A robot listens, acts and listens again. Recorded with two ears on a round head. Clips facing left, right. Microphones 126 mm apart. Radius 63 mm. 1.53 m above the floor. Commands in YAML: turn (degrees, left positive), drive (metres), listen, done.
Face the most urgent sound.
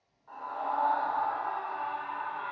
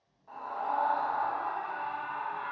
turn: -30
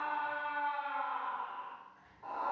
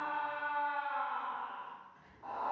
turn: 15
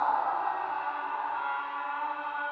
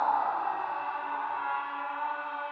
done: "Found it: a scream, straight ahead."